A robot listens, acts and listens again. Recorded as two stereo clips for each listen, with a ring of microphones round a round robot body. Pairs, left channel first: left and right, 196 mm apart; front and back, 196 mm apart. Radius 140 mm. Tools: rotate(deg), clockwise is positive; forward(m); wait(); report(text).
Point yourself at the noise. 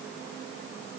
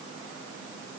wait()
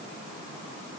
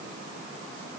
wait()
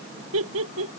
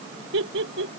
rotate(130)
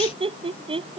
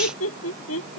rotate(25)
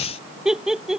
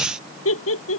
report("Facing the laughter.")